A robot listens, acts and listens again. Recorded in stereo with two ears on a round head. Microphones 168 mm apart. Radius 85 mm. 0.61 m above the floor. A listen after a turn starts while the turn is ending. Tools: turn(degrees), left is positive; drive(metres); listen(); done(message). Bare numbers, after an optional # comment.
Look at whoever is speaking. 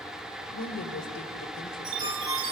# The woman speaking: about 60° left or 120° left.
turn(60)
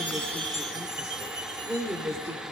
# So it is at 15° right.
turn(-15)
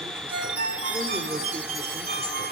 listen()
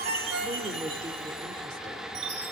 listen()
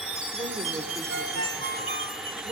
# The woman speaking is now 25° right.
turn(-25)
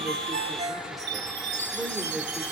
done("Found it: a woman speaking, straight ahead.")